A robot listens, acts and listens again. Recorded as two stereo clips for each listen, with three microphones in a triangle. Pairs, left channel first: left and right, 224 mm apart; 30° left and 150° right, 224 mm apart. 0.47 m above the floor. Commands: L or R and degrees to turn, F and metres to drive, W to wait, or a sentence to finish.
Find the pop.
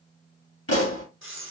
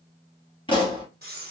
L100
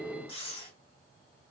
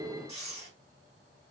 I heard a pop from this way, but can't make it out now.